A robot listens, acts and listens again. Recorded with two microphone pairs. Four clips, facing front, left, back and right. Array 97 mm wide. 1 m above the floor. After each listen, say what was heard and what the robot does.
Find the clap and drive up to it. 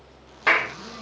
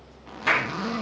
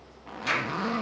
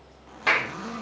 The clap: 15° right. Turn 15° right.
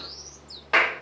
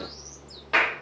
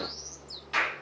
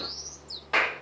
Drive 1.0 m forward.
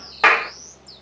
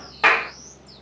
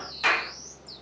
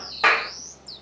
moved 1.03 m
Drive 1.0 m forward.
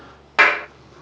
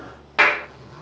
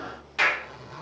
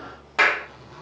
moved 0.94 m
Drive 1.0 m forward.
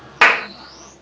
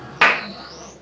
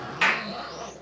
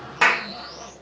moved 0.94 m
The clap is now 15° left. Turn 15° left.
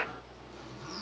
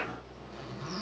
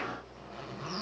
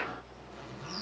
Keep listening.
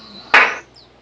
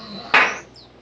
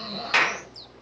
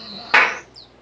Drive 1.0 m forward.
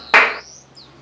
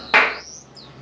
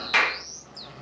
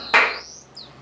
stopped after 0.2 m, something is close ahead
I am next to the clap.